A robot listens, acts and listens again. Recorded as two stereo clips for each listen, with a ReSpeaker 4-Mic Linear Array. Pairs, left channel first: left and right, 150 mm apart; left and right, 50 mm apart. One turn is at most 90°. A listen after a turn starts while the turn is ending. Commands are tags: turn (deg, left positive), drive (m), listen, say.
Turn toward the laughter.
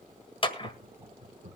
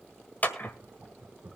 <turn deg="-50"/>
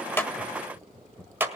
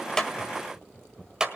<turn deg="20"/>
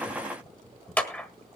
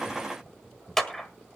<turn deg="10"/>
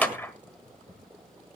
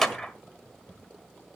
<turn deg="15"/>
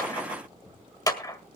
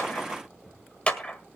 <turn deg="15"/>
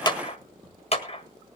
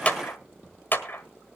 <listen/>
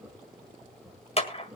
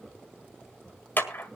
<say>Found it: laughter, straight ahead.</say>